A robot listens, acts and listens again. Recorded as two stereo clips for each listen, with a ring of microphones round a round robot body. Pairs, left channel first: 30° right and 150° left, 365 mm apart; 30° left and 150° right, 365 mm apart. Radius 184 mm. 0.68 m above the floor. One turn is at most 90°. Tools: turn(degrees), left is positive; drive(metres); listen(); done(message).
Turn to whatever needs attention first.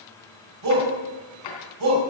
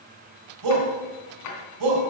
turn(degrees=90)
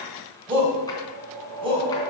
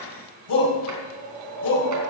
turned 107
turn(degrees=75)
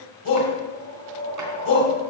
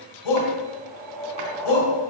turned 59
turn(degrees=15)
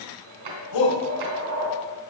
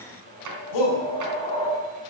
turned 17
done("Facing the shout.")